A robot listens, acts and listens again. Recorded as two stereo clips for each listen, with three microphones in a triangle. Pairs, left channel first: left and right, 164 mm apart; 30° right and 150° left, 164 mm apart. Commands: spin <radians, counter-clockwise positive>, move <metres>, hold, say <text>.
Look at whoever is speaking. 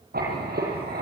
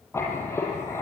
hold
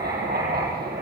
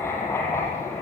hold
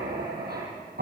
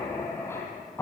say I can't make out anyone speaking, only writing.